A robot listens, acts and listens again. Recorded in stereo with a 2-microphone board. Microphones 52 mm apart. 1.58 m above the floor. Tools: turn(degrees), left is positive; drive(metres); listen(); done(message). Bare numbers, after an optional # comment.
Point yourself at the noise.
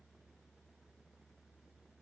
listen()
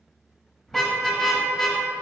turn(30)
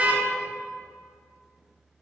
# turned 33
# So it is at 30° right.
turn(-30)
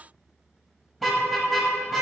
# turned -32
done("Facing the car horn.")